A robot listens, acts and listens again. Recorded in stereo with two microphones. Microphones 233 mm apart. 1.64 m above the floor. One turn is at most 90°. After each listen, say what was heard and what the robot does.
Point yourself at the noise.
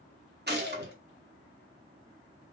The gunshot: about 45° right or 135° right. Turn 45° right.
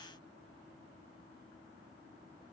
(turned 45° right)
Keep listening.
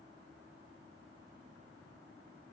I heard a gunshot, but can't make it out now. It was about straight ahead or 90° right.